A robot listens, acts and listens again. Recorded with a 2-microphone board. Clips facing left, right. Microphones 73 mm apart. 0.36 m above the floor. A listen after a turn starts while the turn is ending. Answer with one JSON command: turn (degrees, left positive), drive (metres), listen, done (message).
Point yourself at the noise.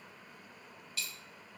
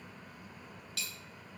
{"turn": -90}
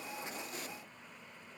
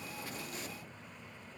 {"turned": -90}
{"done": "I heard a dropped coin from this way, but can't make it out now."}